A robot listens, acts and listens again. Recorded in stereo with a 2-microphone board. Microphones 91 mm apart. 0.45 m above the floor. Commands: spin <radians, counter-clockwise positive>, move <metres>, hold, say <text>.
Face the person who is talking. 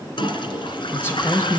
spin 0.44
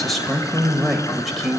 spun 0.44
say Found it: a man speaking, straight ahead.